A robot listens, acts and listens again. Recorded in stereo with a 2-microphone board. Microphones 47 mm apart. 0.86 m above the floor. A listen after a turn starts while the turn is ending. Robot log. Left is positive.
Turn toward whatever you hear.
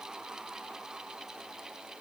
cmd idle
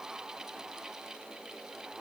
cmd idle
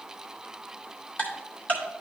note: The ticking: about 35° left or 145° left.
cmd yaw +35
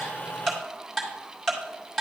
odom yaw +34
end: Facing the ticking, 2 to 4 m away.